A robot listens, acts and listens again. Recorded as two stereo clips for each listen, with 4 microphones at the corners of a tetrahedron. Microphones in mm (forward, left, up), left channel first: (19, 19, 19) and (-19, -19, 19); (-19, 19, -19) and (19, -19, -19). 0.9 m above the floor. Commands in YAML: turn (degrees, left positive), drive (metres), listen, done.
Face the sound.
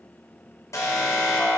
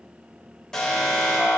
turn: 55
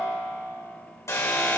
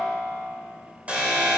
turn: 20
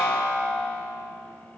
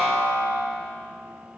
done: "Facing the alarm, 2 to 4 m away."